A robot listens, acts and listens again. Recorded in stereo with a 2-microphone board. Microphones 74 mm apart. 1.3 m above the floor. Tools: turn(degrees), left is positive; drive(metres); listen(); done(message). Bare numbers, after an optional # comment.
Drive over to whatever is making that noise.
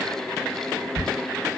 # The ticking: about 45° left or 135° left.
turn(45)
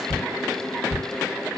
# So it is at 80° left.
turn(80)
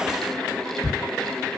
# The ticking is now 10° left.
turn(10)
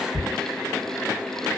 drive(1.0)
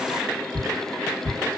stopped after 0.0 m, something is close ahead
done("Blocked. The ticking is further on, straight ahead.")